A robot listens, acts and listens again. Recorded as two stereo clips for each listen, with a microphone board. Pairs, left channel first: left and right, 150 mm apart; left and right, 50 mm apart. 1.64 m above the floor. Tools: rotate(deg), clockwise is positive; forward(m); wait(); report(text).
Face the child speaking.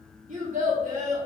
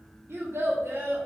rotate(60)
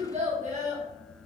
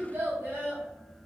rotate(55)
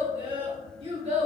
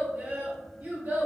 rotate(50)
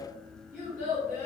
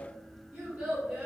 rotate(20)
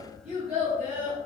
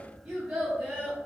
rotate(15)
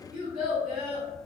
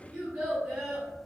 report("Found it: a child speaking, straight ahead, 2 to 4 m away.")